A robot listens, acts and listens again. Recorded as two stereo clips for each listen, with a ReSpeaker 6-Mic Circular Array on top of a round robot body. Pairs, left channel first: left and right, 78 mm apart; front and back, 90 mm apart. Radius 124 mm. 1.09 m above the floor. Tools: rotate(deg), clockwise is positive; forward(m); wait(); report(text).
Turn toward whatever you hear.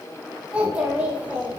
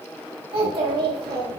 rotate(160)
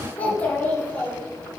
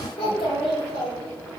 rotate(-20)
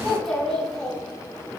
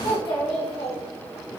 report("Facing the child speaking.")